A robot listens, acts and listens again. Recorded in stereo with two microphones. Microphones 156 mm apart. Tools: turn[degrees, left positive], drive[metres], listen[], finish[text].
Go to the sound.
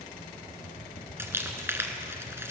Thought: The crumpling: about 15° right or 165° right.
Action: turn[-15]
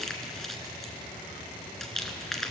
Action: drive[1.0]
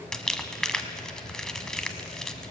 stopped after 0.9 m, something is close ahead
Action: finish[Arrived at the crumpling, straight ahead.]